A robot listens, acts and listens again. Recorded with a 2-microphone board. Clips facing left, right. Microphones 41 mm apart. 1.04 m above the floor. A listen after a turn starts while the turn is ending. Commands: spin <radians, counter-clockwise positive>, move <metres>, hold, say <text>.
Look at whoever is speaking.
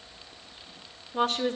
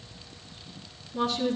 spin 0.96
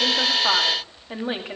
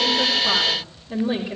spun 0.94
spin 1.22
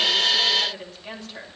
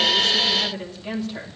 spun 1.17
say Facing the woman speaking, 2 to 4 m away.